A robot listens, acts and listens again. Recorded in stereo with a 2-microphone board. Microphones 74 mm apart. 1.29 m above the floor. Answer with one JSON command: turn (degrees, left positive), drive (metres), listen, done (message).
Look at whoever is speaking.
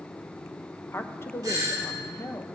{"turn": 35}
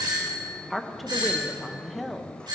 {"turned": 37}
{"done": "Facing the woman speaking."}